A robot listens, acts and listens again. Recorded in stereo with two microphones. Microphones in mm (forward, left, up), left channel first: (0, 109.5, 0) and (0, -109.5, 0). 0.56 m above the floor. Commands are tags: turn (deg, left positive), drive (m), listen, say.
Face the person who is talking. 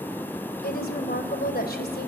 <turn deg="50"/>
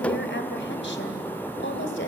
<turn deg="75"/>
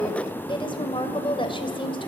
<turn deg="25"/>
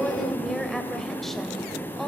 <say>Facing the woman speaking, 2 to 4 m away.</say>